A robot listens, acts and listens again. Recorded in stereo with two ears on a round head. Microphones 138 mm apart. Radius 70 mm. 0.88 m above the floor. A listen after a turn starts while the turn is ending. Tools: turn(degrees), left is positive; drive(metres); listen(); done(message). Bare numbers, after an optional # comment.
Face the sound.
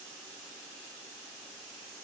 listen()
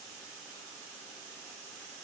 listen()
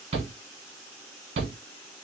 # The shout: about 40° right or 140° right.
turn(-40)
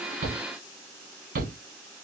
# So it is at 95° right.
turn(-95)
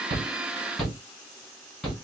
done("Found it: a shout, straight ahead.")